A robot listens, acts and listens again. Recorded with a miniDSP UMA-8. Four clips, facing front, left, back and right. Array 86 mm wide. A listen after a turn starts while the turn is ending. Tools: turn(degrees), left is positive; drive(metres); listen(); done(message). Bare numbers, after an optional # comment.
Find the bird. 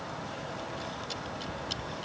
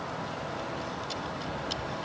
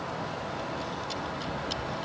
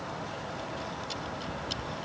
listen()
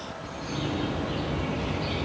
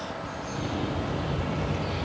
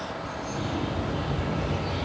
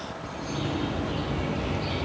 # The bird: 40° right.
turn(-40)
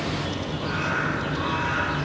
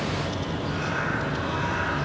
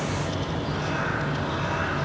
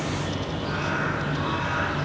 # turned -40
# The bird is now 20° right.
turn(-20)
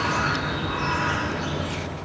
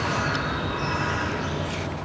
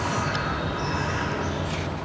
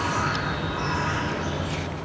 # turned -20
done("Found it: a bird, straight ahead, over 4 m away.")